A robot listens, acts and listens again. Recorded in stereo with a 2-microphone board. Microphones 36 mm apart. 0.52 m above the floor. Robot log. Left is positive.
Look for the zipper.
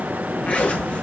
note: The zipper: about 45° left or 135° left.
cmd yaw +45
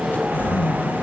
note: So it is at 85° left.
cmd yaw +85
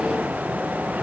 cmd idle
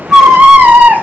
cmd idle
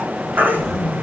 note: The zipper is now 10° right.
cmd yaw -10
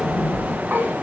end: Found it: a zipper, straight ahead.